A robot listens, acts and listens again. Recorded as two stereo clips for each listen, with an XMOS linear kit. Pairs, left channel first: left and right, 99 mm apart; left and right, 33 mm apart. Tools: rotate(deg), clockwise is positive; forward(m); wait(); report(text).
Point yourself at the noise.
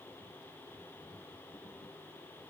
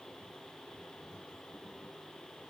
wait()
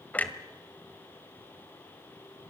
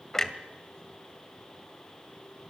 rotate(-15)
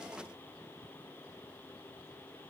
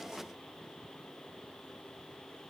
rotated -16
wait()
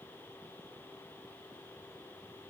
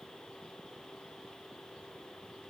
report("I heard a clunk, but can't make it out now. It was about straight ahead or 150° left.")